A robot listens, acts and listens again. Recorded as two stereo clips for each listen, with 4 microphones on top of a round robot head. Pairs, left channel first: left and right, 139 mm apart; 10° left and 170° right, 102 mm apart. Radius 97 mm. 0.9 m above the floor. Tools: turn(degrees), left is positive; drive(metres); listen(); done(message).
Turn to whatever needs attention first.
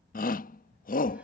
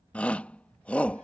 turn(degrees=85)
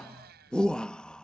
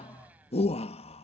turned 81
done("Facing the shout.")